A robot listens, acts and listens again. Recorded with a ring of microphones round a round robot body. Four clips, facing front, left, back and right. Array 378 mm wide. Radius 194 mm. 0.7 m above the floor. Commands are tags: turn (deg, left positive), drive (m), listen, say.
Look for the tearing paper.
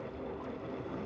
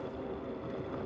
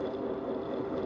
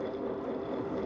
<listen/>
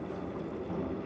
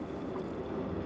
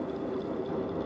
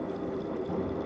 <listen/>
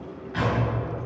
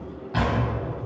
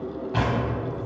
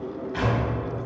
<turn deg="145"/>
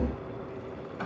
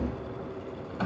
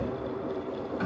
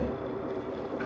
<listen/>
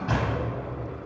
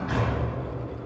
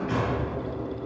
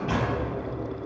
<turn deg="-20"/>
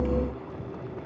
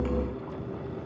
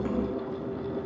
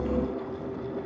<listen/>
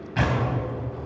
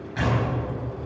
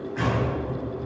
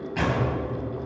<say>Facing the tearing paper.</say>